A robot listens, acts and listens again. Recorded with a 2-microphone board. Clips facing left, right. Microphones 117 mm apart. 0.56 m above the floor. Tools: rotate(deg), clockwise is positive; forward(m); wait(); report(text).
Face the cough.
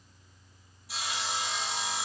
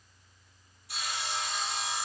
wait()
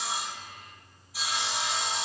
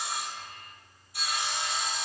wait()
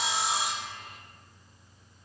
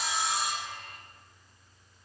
report("I can't make out a cough, only sawing.")